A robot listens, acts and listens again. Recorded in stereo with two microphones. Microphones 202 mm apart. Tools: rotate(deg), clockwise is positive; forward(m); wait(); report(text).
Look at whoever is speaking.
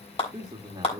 rotate(20)
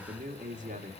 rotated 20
rotate(140)
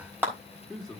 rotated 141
report("Found it: a man speaking, straight ahead, 1 to 2 m away.")